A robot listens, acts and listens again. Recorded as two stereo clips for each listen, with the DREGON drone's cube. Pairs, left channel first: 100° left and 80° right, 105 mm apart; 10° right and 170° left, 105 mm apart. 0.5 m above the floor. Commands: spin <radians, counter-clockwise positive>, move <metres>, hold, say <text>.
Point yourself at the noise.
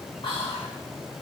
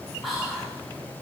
spin 1.40
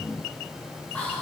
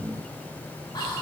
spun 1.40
spin 0.44
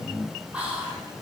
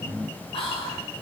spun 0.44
say Found it: whispering, straight ahead, 1 to 2 m away.